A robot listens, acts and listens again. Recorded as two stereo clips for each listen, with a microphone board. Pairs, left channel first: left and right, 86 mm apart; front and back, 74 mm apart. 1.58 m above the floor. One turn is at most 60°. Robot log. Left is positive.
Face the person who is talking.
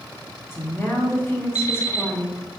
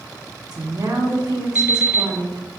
note: The woman speaking: 150° left.
cmd yaw +60
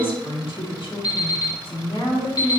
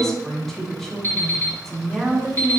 note: The woman speaking is now 85° left.
cmd yaw +60
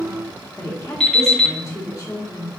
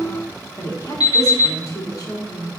note: The woman speaking is now 35° left.
cmd yaw +35
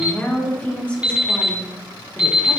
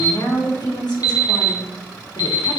note: The woman speaking is now 15° left.
cmd yaw +15
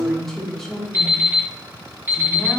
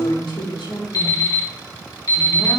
end: Facing the woman speaking.